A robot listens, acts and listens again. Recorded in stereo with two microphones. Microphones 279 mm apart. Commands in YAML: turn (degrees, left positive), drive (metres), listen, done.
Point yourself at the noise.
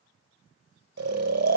turn: -65
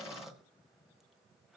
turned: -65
listen: true
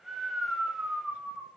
done: "Facing the snoring, under 1 m away."